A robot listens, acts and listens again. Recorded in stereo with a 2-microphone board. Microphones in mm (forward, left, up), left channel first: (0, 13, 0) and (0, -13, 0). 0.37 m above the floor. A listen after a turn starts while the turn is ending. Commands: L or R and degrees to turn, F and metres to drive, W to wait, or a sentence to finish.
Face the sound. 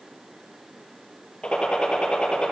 L35
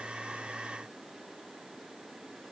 W
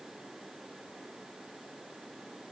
I heard a gunshot, but can't make it out now. It was about straight ahead or 110° left.